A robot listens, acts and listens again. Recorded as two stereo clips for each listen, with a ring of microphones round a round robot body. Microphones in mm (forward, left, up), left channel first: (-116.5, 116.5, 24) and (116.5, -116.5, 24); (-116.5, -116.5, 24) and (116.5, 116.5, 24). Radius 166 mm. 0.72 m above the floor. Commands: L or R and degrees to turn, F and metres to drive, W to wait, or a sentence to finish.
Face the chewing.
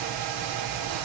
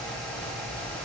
W
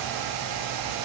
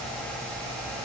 W
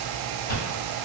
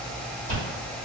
L115
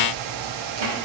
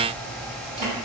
W
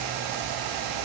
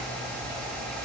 W
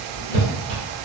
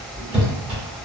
R40
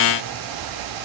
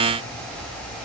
W
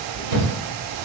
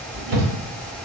Facing the chewing.